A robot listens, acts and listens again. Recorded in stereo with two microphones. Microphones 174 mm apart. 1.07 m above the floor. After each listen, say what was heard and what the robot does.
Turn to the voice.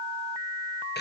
Keep listening.
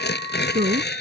The man speaking: about 60° right or 120° right. Turn 60° right.
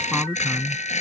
Facing the man speaking.